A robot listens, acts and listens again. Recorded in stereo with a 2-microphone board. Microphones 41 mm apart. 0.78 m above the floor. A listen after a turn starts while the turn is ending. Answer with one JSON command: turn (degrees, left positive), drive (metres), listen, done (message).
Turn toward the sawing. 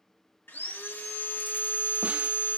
{"turn": 65}
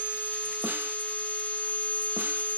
{"turn": 45}
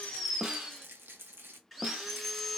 {"done": "Found it: sawing, straight ahead."}